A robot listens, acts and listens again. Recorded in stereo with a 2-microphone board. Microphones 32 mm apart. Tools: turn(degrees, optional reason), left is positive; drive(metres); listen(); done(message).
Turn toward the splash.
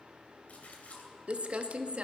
turn(degrees=55, reason="The splash: about 55° left or 125° left.")
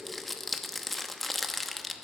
listen()
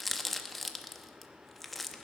done("I heard a splash, but can't make it out now. It was about straight ahead or 70° left.")